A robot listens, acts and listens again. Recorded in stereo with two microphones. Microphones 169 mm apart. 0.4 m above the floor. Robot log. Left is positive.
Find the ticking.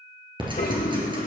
note: The ticking: about 30° right or 150° right.
cmd yaw -30
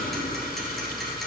end: Found it: ticking, straight ahead.